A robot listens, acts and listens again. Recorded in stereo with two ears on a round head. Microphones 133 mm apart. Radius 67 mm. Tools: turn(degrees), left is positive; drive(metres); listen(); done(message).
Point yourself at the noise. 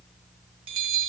turn(degrees=-35)
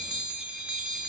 turn(degrees=-10)
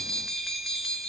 done("Found it: a bell, straight ahead, under 1 m away.")